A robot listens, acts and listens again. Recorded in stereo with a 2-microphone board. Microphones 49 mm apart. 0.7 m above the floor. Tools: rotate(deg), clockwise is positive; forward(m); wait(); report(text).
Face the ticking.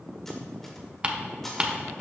rotate(25)
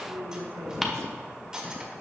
report("Found it: ticking, straight ahead, 1 to 2 m away.")